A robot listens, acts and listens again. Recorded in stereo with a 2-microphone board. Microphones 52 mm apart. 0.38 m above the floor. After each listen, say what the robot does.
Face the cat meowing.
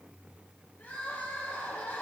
Keep listening.
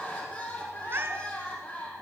Turn 45° right.
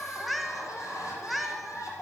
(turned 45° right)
Found it: a cat meowing, straight ahead, 1 to 2 m away.